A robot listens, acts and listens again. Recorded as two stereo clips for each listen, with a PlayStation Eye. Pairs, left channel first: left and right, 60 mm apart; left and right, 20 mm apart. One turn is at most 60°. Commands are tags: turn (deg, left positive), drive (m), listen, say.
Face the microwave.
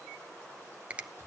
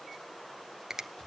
<listen/>
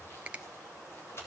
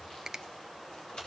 <listen/>
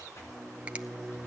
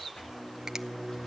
<turn deg="30"/>
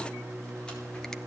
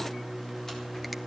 <turn deg="-30"/>
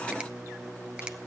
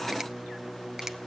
<turn deg="-10"/>
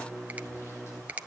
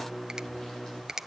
<say>Facing the microwave, 2 to 4 m away.</say>